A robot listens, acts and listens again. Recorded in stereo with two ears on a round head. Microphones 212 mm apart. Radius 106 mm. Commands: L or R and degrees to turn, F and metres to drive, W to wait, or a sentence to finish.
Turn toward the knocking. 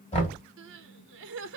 L25
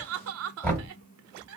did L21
L10
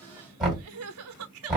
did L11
Facing the knocking, 1 to 2 m away.